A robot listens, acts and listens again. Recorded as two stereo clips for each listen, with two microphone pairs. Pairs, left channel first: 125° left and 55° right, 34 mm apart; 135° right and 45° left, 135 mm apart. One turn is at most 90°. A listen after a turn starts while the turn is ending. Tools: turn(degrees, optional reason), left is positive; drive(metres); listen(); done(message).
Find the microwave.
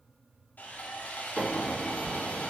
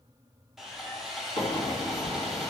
turn(degrees=-90, reason="The microwave: 115° right.")
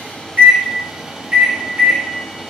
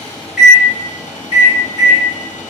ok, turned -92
turn(degrees=-20, reason="The microwave is now 20° right.")
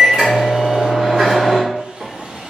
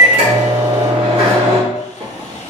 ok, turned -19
done("Found it: a microwave, straight ahead.")